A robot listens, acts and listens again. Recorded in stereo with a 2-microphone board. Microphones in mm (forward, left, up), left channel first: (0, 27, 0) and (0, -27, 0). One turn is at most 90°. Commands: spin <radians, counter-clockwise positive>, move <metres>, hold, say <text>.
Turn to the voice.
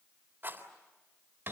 hold
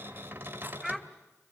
spin 0.52
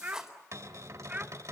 spin -0.44
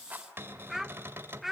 say Found it: a child speaking, straight ahead.